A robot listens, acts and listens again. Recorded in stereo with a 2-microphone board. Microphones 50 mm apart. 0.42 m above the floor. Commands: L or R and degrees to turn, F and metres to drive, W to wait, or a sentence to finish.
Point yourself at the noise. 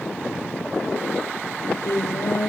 L90
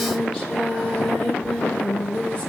L15
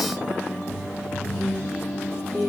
Found it: singing, straight ahead, over 4 m away.